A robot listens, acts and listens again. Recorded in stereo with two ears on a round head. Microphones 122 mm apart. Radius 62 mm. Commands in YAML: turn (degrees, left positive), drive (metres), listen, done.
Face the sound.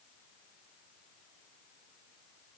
listen: true
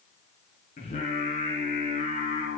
turn: 50
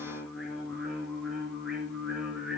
done: "Facing the singing, over 4 m away."